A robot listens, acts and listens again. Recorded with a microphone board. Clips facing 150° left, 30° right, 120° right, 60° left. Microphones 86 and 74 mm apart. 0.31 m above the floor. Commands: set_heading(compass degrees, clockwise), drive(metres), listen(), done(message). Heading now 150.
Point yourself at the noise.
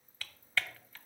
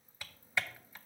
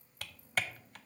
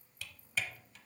set_heading(250)
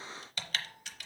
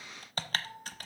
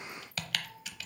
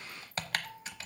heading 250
set_heading(240)
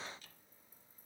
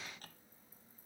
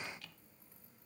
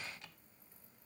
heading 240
listen()
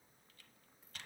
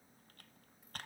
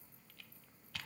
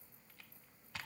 done("Found it: typing on a keyboard, straight ahead.")